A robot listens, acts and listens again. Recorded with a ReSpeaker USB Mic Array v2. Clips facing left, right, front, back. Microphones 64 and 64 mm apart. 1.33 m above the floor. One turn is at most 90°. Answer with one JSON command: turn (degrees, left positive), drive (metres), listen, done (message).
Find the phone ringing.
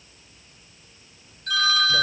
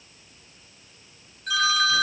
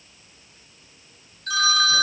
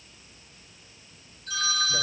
{"done": "Found it: a phone ringing, straight ahead."}